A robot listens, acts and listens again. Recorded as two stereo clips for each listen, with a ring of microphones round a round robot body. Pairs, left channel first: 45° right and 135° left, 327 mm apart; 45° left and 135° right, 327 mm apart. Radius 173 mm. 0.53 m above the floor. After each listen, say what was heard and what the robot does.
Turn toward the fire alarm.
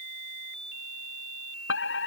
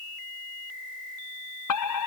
The fire alarm: 10° left. Turn 10° left.
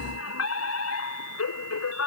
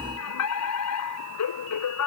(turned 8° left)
Found it: a fire alarm, straight ahead.